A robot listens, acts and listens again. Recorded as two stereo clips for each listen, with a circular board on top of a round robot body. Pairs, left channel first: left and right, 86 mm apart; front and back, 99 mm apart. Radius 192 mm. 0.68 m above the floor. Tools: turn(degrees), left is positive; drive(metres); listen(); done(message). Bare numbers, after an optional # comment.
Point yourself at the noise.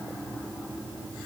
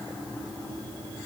listen()
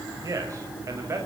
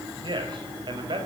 # The man speaking: 145° right.
turn(-145)
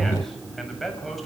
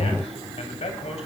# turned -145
done("Found it: a man speaking, straight ahead, over 4 m away.")